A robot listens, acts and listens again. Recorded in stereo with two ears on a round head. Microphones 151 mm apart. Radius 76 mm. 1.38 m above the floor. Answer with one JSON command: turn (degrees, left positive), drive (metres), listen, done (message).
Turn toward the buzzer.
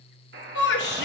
{"turn": -75}
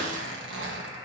{"turn": -25}
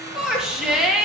{"listen": true}
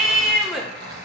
{"listen": true}
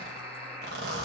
{"turn": -15}
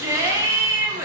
{"listen": true}
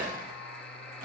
{"done": "Facing the buzzer."}